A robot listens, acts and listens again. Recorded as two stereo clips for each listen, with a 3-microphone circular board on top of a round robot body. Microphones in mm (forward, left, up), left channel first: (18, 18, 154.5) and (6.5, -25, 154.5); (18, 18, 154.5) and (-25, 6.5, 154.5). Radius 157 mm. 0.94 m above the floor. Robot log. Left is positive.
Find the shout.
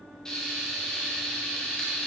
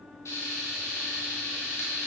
cmd idle
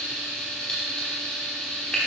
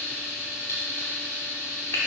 cmd idle
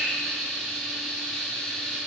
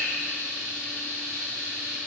end: I can't make out a shout, only frying.